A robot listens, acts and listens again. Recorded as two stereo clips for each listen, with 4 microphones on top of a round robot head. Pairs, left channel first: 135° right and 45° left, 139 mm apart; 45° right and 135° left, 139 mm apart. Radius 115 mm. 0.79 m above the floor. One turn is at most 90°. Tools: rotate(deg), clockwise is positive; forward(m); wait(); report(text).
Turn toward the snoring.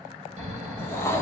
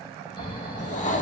report("Facing the snoring, 2 to 4 m away.")